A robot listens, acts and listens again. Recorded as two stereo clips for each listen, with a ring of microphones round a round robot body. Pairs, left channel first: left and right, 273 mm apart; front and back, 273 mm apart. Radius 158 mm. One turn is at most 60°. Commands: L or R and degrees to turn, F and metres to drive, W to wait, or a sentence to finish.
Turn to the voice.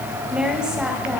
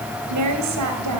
R60
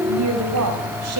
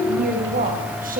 R60
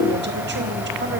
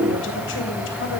R60
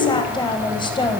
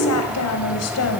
L20
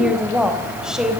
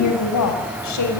Facing the woman speaking.